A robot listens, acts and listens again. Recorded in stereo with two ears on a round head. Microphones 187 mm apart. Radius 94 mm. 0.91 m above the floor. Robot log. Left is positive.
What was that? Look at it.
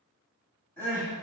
cmd yaw +30
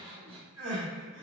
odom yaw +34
note: So it is at 25° right.
cmd yaw -25
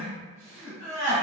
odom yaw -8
note: The crying is now 15° right.
cmd yaw -15
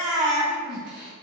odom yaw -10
end: Facing the crying.